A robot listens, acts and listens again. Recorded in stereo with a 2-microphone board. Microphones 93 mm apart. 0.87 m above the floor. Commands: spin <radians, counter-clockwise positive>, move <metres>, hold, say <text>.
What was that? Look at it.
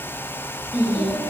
spin -0.35
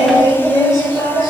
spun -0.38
spin -2.44
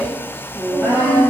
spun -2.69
spin 0.26
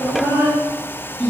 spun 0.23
say Facing the singing.